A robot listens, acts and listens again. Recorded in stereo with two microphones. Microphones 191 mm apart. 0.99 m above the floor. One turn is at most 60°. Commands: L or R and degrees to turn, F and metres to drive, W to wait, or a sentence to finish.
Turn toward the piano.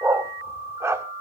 W
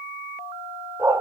W
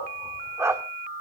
I can't make out a piano, only a dog barking.